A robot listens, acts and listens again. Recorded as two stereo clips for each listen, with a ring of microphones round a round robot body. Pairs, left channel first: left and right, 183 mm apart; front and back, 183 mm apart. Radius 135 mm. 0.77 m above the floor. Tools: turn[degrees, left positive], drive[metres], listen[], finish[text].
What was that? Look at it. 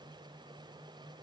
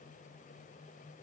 Action: listen[]
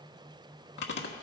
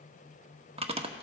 Thought: The chewing: 120° left.
Action: turn[120]
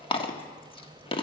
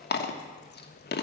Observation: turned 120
Thought: The chewing is now 30° left.
Action: turn[30]
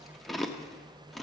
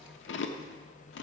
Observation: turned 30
Action: finish[Facing the chewing, 1 to 2 m away.]